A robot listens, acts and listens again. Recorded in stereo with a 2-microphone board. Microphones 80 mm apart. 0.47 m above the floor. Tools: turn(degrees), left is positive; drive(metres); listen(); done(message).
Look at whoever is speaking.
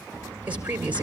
turn(degrees=-20)
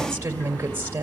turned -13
turn(degrees=-155)
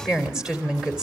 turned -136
turn(degrees=-10)
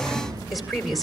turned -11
done("Facing the woman speaking, 2 to 4 m away.")